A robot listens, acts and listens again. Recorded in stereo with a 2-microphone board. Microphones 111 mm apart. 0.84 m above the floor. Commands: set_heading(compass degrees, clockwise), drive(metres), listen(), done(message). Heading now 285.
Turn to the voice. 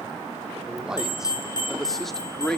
set_heading(255)
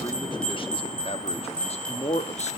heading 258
set_heading(143)
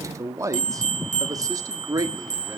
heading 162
set_heading(192)
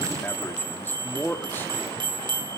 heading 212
set_heading(192)
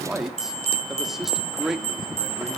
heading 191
done("Facing the man speaking.")